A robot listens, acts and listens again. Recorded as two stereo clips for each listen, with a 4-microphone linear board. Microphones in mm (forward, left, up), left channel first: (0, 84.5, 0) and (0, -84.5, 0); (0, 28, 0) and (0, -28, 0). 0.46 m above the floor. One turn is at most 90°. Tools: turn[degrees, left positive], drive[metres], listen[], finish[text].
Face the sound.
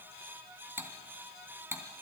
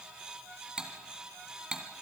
Action: turn[-30]
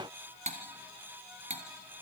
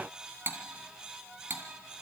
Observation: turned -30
Thought: So it is at 135° right.
Action: turn[-90]
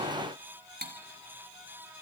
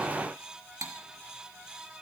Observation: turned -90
Thought: The cutlery clinking is now 85° right.
Action: turn[-85]
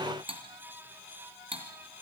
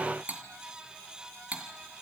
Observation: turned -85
Thought: The cutlery clinking is now 35° right.
Action: turn[-35]
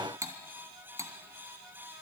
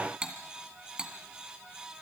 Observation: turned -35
Thought: The cutlery clinking is now 20° right.
Action: turn[-20]
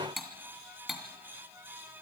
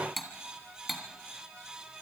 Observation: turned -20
Action: finish[Facing the cutlery clinking, 2 to 4 m away.]